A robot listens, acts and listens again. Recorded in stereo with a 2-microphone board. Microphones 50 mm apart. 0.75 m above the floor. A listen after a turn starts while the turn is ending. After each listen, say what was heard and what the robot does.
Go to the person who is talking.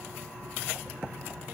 Keep listening.
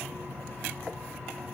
Keep listening.
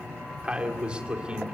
The man speaking: about 20° right or 160° right. Turn 20° right.
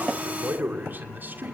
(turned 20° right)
So it is at 135° right. Turn 135° right.
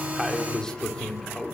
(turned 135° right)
The man speaking is now 15° left. Turn 15° left.
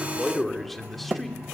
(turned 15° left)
Drive 1.0 m forward.
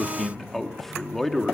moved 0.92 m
The man speaking is now 10° left. Turn 10° left.
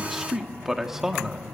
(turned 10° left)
Drive 1.0 m forward.
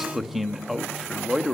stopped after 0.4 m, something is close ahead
Arrived at the man speaking, straight ahead.